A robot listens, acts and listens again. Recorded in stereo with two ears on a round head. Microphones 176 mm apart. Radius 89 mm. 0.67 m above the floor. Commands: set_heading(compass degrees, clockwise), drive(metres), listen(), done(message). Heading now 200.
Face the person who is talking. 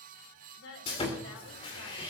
set_heading(110)
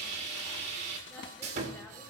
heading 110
listen()
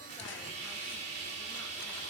listen()
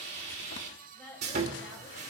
set_heading(100)
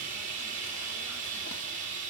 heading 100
listen()
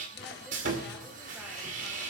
listen()
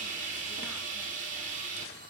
done("I heard a woman speaking from this way, but can't make it out now.")